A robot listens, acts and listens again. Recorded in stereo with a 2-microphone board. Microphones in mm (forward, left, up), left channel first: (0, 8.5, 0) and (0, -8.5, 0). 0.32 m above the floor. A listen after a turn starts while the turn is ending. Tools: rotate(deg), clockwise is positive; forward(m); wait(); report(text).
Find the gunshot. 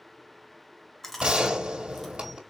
rotate(75)
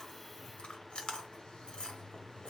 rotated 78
wait()
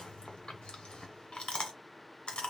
report("I heard a gunshot, but can't make it out now. It was about 5° left or 25° right.")